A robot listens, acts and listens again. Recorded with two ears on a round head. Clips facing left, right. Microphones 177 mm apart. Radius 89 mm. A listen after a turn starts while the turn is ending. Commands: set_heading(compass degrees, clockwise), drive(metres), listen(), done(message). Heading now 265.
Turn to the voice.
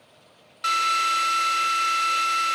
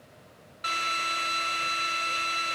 listen()
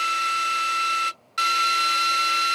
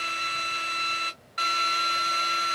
listen()
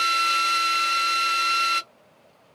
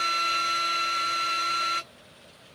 done("I can't make out anyone speaking, only a drill.")